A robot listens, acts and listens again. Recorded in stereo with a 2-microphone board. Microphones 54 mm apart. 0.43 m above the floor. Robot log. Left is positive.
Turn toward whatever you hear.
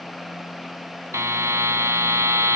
note: The buzzer: about 60° right or 120° right.
cmd yaw -60
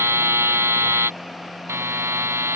note: So it is at 55° right.
cmd yaw -55
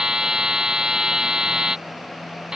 note: The buzzer is now 15° right.
cmd yaw -15
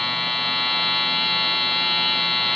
end: Facing the buzzer.